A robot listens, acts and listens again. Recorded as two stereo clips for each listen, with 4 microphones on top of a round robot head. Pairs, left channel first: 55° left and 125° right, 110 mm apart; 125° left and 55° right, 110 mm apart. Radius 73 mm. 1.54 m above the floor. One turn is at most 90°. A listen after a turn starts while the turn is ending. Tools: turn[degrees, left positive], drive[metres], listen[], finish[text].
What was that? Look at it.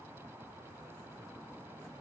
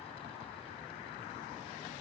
Action: listen[]
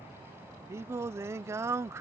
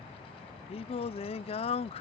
Thought: The singing: 165° left.
Action: turn[90]
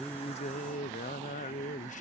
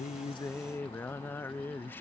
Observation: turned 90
Thought: The singing is now 55° left.
Action: turn[55]
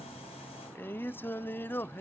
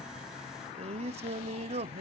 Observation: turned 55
Thought: The singing is now 20° right.
Action: turn[-20]
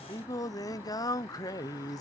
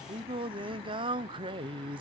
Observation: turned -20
Action: finish[Facing the singing.]